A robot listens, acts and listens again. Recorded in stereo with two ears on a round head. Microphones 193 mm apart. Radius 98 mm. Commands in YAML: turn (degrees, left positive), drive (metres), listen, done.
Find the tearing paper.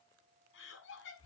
listen: true
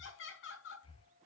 listen: true
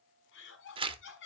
turn: -25
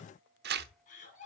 turn: -130
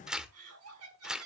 done: "Facing the tearing paper, 1 to 2 m away."